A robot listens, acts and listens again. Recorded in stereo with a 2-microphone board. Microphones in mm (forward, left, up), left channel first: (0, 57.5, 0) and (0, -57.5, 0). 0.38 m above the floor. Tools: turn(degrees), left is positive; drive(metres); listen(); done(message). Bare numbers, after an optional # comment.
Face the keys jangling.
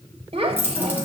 # The keys jangling: about 20° right or 160° right.
turn(-20)
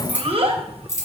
# So it is at 30° left.
turn(30)
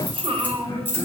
# The keys jangling is now 20° left.
turn(20)
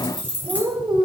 # The keys jangling is now 15° left.
turn(15)
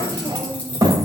listen()
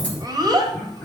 listen()
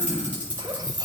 # The keys jangling is now 15° left.
turn(15)
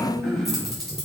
done("Facing the keys jangling, over 4 m away.")